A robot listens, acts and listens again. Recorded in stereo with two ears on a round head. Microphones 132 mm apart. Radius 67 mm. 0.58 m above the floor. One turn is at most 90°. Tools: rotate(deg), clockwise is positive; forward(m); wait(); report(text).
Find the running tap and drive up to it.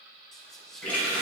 rotate(-30)
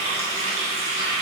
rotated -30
rotate(20)
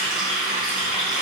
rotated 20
forward(1.0)
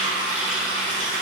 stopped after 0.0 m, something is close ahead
report("Something is in my way. I am facing the running tap but have not reached it.")